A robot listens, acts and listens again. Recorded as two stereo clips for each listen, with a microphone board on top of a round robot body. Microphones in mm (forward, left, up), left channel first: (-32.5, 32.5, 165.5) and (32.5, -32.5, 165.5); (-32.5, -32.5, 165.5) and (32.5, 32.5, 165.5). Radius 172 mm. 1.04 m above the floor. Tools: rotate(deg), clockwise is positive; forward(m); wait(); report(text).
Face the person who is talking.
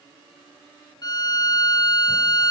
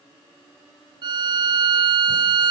wait()
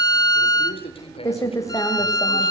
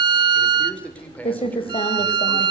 rotate(-150)
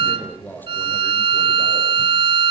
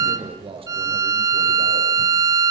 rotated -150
rotate(-65)
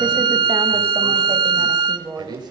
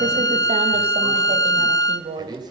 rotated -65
report("Found it: a man speaking, straight ahead.")